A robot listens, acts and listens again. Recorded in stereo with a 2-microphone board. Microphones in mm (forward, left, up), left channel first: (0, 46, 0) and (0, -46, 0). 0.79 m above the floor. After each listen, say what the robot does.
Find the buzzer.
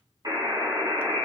Turn 50° right.
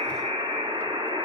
Turn 80° right.
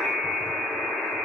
Facing the buzzer.